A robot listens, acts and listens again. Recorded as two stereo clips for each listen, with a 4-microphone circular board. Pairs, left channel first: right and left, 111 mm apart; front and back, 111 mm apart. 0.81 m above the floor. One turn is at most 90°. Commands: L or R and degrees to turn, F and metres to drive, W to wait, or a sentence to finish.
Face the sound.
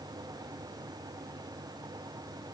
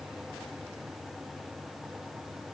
W
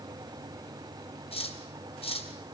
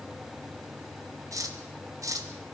R90
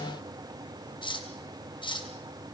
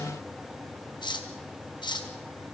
R45
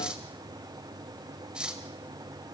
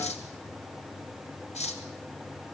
L10
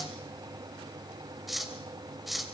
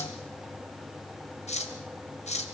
Facing the cutlery clinking.